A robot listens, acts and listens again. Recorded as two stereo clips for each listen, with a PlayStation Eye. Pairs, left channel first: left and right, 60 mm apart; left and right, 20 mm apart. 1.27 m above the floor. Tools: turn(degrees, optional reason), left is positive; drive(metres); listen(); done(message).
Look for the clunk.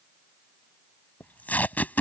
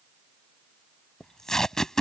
listen()
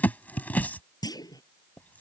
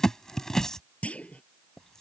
turn(degrees=90)
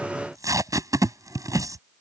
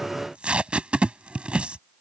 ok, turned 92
done("I heard a clunk from this way, but can't make it out now.")